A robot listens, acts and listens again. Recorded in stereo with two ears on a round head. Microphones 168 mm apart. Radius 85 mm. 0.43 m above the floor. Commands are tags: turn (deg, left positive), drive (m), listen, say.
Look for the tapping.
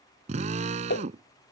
<turn deg="60"/>
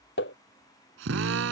<turn deg="60"/>
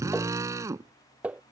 <say>Found it: tapping, straight ahead.</say>